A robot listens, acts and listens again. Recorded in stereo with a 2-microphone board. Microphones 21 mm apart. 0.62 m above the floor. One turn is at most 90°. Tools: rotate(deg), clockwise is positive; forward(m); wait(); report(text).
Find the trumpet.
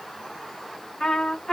rotate(-40)
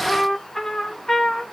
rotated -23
rotate(-20)
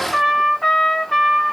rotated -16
report("Found it: a trumpet, straight ahead.")